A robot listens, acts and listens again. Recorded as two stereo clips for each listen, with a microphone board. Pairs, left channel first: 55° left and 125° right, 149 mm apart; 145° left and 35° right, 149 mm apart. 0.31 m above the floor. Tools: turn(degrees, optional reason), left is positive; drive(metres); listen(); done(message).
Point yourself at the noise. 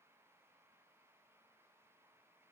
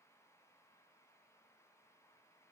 listen()
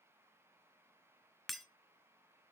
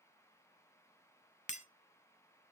turn(degrees=145, reason="The breaking glass: 145° left.")
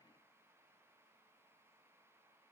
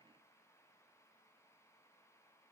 done("Facing where the breaking glass came from. I can't hear it now.")